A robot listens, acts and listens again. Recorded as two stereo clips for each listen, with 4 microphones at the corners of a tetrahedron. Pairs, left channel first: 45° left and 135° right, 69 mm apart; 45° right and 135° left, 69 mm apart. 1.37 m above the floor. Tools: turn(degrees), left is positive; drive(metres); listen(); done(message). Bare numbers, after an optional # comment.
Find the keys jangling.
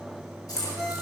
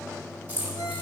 # The keys jangling: 70° left.
turn(70)
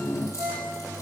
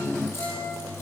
listen()
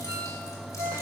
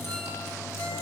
listen()
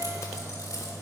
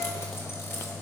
done("Facing where the keys jangling came from. I can't hear it now.")